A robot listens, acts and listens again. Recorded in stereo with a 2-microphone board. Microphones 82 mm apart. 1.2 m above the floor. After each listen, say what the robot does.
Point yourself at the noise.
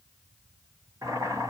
Turn 40° right.
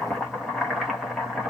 Facing the boiling, 1 to 2 m away.